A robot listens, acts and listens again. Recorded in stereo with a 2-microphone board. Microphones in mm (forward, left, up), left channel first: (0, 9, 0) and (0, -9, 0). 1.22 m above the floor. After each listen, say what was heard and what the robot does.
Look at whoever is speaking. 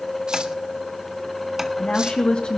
The woman speaking: about 75° left or 105° left. Turn 75° left.
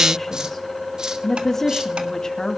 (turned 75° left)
So it is at 35° left. Turn 35° left.
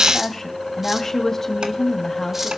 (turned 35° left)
The woman speaking is now 20° left. Turn 20° left.
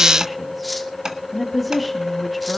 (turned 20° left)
Found it: a woman speaking, straight ahead.